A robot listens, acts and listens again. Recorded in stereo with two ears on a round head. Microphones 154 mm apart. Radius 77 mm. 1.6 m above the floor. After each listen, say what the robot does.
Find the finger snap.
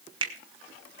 Turn 30° right.
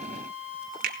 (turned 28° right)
Turn 125° right.
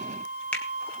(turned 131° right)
Found it: a finger snap, straight ahead, 2 to 4 m away.